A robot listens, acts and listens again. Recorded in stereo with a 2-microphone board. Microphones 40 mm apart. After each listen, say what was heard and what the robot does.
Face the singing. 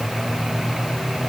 Keep listening.
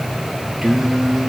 Turn 30° right.
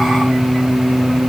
So it is at 140° right. Turn 140° right.
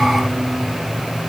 Keep listening.
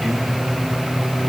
Keep listening.
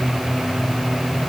I heard singing from this way, but can't make it out now.